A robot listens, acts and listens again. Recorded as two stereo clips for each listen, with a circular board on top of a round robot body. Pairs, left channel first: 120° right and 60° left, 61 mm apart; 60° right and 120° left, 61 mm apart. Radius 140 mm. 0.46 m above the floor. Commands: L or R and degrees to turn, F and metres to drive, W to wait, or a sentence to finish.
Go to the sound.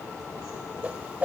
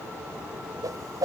L125
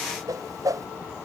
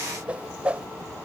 L50
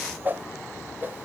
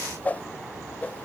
F1.0
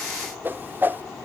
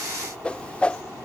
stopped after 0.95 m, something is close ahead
L10
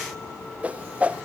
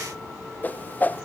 Arrived at the whoosh, straight ahead.